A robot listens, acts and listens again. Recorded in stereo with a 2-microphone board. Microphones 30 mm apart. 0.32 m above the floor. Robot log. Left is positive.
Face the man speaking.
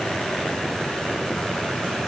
cmd idle
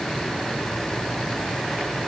cmd idle
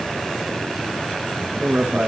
note: The man speaking: about 70° right or 110° right.
cmd yaw -70
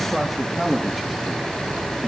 end: Facing the man speaking, over 4 m away.